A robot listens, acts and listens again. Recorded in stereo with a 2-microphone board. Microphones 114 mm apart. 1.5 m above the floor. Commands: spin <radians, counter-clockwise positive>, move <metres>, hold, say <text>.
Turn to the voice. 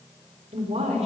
spin -1.22
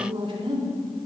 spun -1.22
spin -0.79
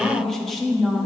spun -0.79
say Facing the woman speaking.